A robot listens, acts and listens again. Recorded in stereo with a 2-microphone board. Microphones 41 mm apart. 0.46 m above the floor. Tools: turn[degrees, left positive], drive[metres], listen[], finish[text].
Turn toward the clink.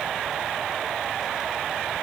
Action: listen[]
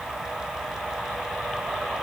Action: listen[]
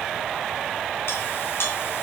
Thought: The clink: about 70° left or 110° left.
Action: turn[70]
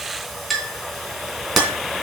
Action: finish[Facing the clink.]